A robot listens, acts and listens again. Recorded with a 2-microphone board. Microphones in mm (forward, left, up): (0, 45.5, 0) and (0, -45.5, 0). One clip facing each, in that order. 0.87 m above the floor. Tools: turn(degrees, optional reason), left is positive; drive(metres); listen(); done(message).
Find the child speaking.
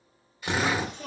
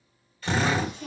turn(degrees=90)
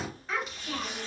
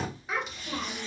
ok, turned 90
turn(degrees=-15, reason="So it is at 15° right.")
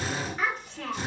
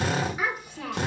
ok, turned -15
turn(degrees=-15, reason="The child speaking is now 15° right.")
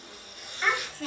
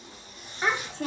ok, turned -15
turn(degrees=-25, reason="The child speaking is now 25° right.")
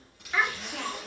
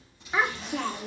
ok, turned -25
turn(degrees=-35, reason="The child speaking is now 35° right.")
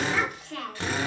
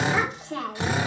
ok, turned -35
turn(degrees=-25, reason="The child speaking is now 25° right.")
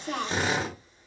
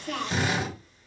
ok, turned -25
turn(degrees=25, reason="The child speaking is now 25° left.")
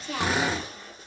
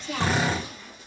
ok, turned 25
done("Found it: a child speaking, straight ahead, 1 to 2 m away.")